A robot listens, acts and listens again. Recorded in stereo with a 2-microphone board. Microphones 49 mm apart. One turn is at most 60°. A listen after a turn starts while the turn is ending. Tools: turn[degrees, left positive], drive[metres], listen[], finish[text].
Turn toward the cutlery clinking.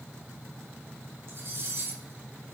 Thought: The cutlery clinking: about 50° right or 130° right.
Action: turn[-50]
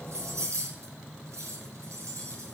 Thought: So it is at 80° right.
Action: turn[-60]
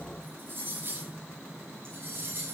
Thought: The cutlery clinking is now 45° right.
Action: turn[-45]
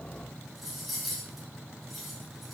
Action: finish[Found it: cutlery clinking, straight ahead.]